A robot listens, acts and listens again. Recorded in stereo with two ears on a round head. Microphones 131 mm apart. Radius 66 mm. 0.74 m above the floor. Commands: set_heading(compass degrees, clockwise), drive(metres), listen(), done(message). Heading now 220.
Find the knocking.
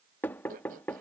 set_heading(190)
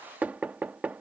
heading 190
set_heading(205)
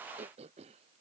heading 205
listen()
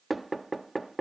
done("Facing the knocking.")